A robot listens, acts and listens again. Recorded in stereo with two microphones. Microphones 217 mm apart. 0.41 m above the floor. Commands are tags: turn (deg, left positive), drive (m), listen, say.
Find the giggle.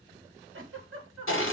<turn deg="-70"/>
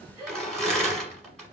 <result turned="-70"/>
<turn deg="-15"/>
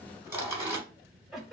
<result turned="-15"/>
<say>Facing the giggle.</say>